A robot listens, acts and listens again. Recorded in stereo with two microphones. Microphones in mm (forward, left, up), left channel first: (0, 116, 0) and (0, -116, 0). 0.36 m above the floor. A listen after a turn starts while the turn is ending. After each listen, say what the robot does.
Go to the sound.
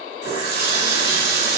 Turn 45° right.
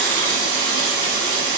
Turn 90° right.
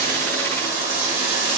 Turn 20° right.
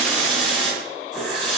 Drive 1.0 m forward.
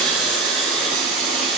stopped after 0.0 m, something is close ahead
Something is in my way. I am facing the running tap but have not reached it.